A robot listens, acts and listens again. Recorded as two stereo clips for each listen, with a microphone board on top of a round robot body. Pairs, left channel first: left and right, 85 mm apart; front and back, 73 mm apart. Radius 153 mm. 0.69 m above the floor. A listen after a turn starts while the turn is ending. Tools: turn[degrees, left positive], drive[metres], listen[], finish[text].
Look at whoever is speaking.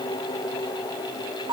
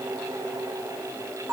Action: listen[]
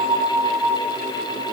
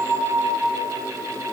Action: listen[]
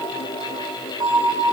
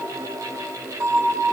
Action: finish[I can't make out anyone speaking, only a bell.]